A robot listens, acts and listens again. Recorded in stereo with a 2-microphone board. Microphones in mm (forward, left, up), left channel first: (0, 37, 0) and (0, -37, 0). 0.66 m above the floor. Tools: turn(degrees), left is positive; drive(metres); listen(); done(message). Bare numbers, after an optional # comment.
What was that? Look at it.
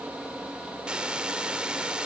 turn(-30)
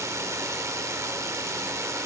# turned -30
# So it is at 135° right.
turn(-135)
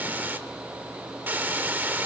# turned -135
# The hiss is now 25° right.
turn(-25)
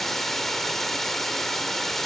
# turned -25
done("Facing the hiss.")